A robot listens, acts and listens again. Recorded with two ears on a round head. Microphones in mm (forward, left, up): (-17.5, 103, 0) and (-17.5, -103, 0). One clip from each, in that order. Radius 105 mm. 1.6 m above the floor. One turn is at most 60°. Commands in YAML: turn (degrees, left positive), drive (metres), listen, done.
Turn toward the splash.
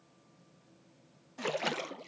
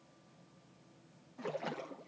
turn: 60
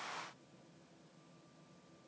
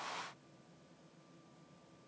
listen: true
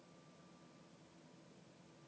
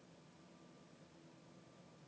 done: "I heard a splash, but can't make it out now. It was about straight ahead or 60° left."